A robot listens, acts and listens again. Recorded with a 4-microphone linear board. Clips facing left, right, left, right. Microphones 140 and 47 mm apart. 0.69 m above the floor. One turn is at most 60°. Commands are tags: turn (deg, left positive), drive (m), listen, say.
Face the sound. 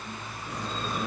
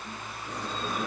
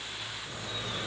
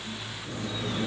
<turn deg="-30"/>
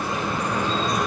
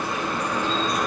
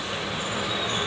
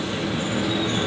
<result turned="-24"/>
<turn deg="15"/>
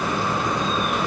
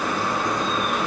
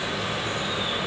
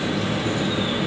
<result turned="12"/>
<say>Found it: dripping, straight ahead, over 4 m away.</say>